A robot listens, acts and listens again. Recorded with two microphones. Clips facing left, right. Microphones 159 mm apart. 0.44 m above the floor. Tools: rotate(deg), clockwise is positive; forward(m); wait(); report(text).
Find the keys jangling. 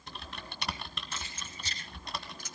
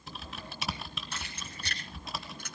rotate(70)
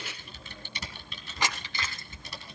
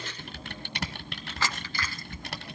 rotate(-20)
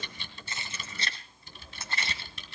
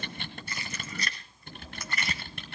rotate(-30)
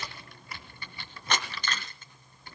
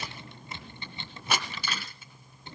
rotate(10)
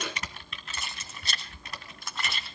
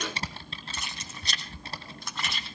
report("Found it: keys jangling, straight ahead.")